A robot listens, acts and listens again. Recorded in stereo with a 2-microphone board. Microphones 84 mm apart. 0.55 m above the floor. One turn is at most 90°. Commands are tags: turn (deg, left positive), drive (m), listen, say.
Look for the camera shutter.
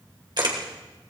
<turn deg="-65"/>
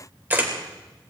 <turn deg="-25"/>
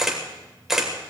<say>Facing the camera shutter.</say>